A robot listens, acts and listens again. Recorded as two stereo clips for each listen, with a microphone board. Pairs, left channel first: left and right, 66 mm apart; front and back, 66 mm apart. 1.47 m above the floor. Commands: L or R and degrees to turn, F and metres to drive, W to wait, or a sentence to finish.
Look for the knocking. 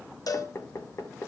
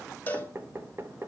L130
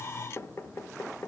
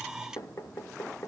L40
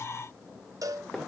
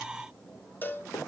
W
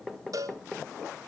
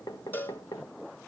Facing the knocking, 1 to 2 m away.